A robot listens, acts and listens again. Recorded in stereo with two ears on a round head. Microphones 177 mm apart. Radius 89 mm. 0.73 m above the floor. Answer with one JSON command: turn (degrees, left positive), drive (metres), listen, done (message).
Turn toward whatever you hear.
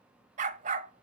{"turn": -40}
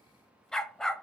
{"done": "Facing the dog barking, 1 to 2 m away."}